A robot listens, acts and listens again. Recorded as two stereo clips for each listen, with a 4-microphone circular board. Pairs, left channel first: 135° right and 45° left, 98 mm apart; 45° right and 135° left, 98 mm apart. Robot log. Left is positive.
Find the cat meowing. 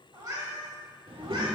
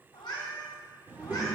end: Found it: a cat meowing, straight ahead, 1 to 2 m away.